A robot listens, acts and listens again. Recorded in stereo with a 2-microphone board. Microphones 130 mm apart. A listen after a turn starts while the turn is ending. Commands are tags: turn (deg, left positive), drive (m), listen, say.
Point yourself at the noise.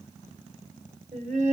<turn deg="-65"/>
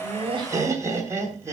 <turn deg="-20"/>
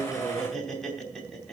<say>Found it: laughter, straight ahead.</say>